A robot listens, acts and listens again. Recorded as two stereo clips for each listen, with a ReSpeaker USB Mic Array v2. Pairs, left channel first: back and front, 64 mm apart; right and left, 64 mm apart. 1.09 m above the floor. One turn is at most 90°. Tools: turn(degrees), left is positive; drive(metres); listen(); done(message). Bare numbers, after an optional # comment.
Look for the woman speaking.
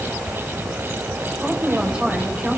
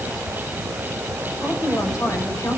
# The woman speaking: 70° right.
turn(-70)
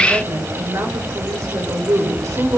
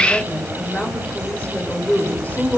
# The woman speaking is now 30° right.
turn(-30)
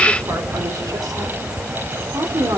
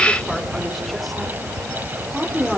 done("Facing the woman speaking, 2 to 4 m away.")